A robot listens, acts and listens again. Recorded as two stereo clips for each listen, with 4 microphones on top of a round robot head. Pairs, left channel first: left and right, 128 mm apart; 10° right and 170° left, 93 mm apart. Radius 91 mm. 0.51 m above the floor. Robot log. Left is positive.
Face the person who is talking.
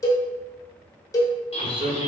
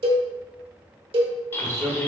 note: The man speaking: 135° right.
cmd yaw -135
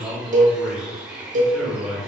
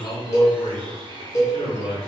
end: Found it: a man speaking, straight ahead.